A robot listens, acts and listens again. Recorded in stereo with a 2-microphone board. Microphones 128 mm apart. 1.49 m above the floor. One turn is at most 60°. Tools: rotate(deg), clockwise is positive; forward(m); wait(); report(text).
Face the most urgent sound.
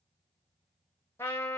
wait()
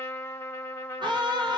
rotate(35)
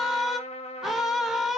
report("Facing the scream, 1 to 2 m away.")